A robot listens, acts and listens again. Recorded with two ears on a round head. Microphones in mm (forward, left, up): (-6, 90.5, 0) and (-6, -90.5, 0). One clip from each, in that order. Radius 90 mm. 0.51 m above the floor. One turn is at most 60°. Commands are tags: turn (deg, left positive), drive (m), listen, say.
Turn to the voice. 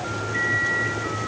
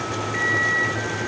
<listen/>
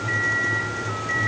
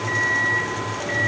<listen/>
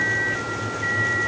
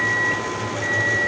<say>I can't make out anyone speaking to turn to.</say>